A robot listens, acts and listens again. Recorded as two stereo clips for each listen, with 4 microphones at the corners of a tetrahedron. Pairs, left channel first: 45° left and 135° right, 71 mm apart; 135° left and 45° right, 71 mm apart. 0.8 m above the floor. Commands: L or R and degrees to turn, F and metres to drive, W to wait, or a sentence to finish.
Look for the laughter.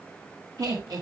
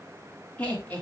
R160
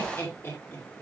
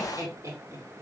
Found it: laughter, straight ahead, 2 to 4 m away.